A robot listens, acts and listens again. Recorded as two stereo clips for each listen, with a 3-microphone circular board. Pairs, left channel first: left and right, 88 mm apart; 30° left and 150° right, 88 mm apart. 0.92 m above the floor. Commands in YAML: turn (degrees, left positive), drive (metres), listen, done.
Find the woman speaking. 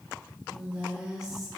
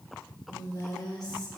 done: "Facing the woman speaking, 2 to 4 m away."